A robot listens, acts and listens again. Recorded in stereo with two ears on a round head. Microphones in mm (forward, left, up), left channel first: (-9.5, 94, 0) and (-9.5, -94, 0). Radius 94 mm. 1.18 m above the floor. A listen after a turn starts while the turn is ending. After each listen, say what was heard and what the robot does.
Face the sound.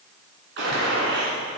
The gunshot: about 65° right or 115° right. Turn 65° right.
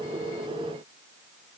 Keep listening.
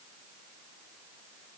I heard a gunshot, but can't make it out now. It was about straight ahead or 50° right.